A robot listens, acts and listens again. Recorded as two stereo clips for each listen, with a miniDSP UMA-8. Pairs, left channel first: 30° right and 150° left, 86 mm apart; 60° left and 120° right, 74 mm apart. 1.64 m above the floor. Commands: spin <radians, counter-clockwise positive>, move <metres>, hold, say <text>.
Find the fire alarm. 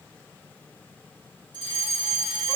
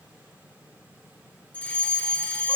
spin 2.27
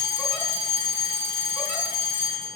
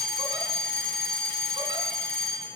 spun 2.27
spin -0.35
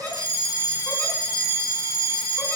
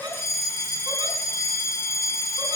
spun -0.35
say Facing the fire alarm, over 4 m away.